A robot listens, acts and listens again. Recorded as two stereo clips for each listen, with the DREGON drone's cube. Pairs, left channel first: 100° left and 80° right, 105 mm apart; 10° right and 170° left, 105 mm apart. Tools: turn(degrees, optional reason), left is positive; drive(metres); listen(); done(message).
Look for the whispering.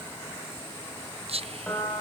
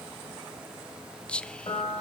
turn(degrees=-90, reason="The whispering: 90° right.")
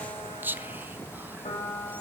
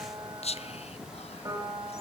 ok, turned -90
done("Facing the whispering.")